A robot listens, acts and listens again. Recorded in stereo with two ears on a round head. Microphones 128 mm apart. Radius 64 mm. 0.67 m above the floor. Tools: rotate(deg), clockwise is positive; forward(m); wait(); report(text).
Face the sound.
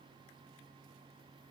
wait()
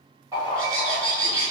rotate(25)
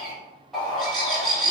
report("Facing the bird, 1 to 2 m away.")